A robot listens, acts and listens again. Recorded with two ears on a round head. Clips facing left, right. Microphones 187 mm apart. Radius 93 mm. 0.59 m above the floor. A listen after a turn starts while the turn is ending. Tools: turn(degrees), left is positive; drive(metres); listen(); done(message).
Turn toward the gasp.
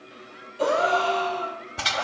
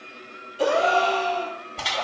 turn(degrees=-55)
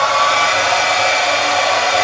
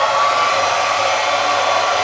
listen()
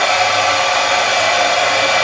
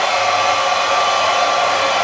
done("I heard a gasp, but can't make it out now. It was about straight ahead or 70° right.")